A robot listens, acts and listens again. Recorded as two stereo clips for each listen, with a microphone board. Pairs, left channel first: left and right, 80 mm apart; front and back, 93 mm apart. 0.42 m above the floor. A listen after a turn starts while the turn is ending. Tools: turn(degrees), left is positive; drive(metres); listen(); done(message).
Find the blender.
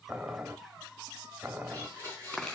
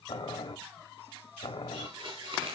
turn(degrees=-150)
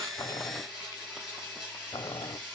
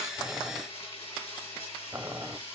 done("Found it: a blender, straight ahead, over 4 m away.")